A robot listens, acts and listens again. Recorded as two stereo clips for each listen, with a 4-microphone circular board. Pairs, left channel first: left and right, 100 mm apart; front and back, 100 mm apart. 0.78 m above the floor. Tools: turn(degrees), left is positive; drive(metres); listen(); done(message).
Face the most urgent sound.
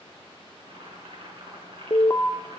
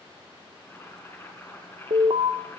turn(degrees=150)
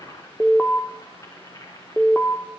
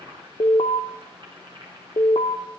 done("Found it: an alarm, straight ahead.")